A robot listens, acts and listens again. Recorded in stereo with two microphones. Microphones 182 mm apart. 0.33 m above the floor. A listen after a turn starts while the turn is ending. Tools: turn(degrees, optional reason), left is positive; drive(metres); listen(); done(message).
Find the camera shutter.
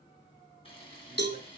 turn(degrees=30, reason="The camera shutter: about 30° left or 150° left.")
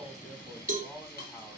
turn(degrees=120, reason="So it is at 120° left.")
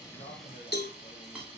done("Facing the camera shutter, 2 to 4 m away.")